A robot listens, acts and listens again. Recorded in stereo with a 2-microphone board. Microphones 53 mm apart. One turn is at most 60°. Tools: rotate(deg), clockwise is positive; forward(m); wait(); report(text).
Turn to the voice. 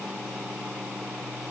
wait()
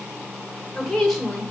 rotate(-30)
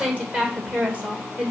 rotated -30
rotate(25)
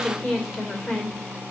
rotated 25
report("Facing the woman speaking, 2 to 4 m away.")